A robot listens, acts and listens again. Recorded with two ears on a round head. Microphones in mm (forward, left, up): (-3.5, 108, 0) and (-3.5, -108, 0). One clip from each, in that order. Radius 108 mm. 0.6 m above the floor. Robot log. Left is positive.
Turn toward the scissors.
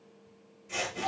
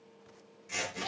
note: The scissors: about 40° right or 140° right.
cmd yaw -40
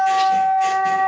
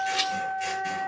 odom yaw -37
cmd idle
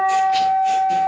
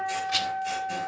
cmd idle
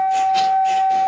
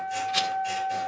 end: I heard scissors, but can't make it out now. It was about 5° right or 100° right.